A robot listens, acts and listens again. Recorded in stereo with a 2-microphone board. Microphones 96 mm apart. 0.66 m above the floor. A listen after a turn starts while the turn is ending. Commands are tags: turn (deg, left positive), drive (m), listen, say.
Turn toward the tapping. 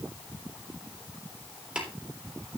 <turn deg="-30"/>
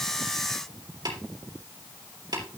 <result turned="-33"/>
<turn deg="-140"/>
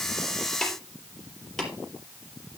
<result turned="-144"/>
<say>Facing the tapping.</say>